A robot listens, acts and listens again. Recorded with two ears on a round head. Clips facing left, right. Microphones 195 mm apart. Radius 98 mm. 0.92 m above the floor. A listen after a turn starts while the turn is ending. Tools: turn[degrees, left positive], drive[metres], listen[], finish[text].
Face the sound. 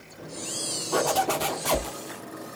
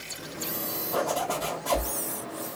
Action: turn[90]
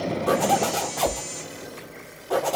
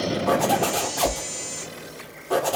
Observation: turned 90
Action: finish[Facing the zipper, 1 to 2 m away.]